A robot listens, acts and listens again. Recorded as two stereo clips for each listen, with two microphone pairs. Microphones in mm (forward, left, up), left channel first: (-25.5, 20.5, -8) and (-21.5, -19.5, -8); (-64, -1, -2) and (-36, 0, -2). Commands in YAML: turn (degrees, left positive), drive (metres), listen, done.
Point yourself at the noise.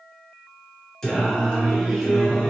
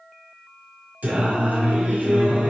turn: 20
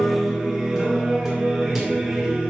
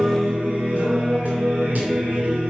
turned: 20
done: "Found it: singing, straight ahead, 2 to 4 m away."